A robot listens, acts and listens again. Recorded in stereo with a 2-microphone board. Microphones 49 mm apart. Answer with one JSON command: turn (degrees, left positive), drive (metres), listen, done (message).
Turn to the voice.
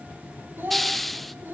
{"turn": -45}
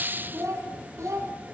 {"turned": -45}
{"turn": -95}
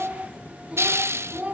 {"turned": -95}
{"turn": -25}
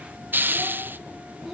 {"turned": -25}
{"done": "Facing the child speaking, over 4 m away."}